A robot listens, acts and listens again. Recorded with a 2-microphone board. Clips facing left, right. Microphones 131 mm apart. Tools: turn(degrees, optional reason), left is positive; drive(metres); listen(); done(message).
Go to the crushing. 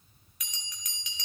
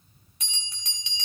listen()
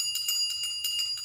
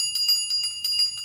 listen()
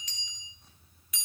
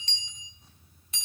done("I can't make out crushing to turn to.")